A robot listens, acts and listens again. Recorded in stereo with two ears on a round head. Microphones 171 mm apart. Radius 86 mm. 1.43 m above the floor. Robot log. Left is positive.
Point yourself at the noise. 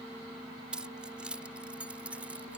cmd yaw -30
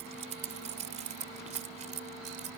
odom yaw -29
note: So it is at 140° right.
cmd yaw -140
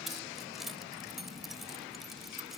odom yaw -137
end: Found it: keys jangling, straight ahead.